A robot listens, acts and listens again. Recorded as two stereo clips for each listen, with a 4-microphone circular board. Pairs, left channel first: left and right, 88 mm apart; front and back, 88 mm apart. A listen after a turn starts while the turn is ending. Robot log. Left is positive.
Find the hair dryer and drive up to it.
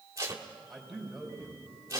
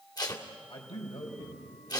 cmd idle
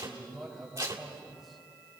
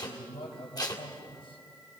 cmd idle
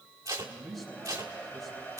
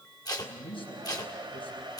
note: The hair dryer: 160° left.
cmd yaw +160
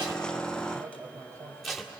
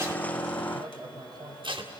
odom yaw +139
note: Nothing new. It was at 20° left.
cmd yaw +20
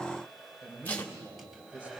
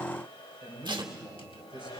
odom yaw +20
cmd fwd 1.0
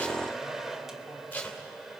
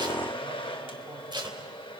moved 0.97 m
cmd fwd 1.0
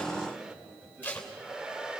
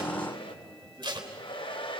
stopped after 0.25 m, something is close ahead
note: The hair dryer is now 10° right.
cmd yaw -10
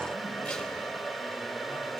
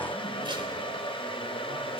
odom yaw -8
end: Arrived at the hair dryer, straight ahead.